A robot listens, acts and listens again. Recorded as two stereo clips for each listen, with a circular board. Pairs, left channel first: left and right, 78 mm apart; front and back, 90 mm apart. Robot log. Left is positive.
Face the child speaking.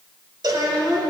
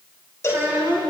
note: The child speaking: 115° right.
cmd yaw -115
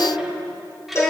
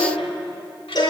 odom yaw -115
end: Facing the child speaking.